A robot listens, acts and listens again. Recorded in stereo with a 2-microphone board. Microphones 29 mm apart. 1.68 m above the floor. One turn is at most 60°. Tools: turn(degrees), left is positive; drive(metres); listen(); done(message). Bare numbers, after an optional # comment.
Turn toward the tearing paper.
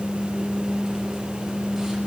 listen()
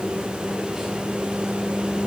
listen()
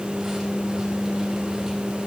done("I can't make out tearing paper.")